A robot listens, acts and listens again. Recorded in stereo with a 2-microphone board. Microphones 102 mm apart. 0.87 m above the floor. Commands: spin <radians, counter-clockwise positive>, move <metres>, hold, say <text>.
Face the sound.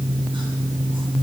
hold
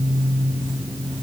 hold
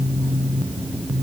say I can't make out anything.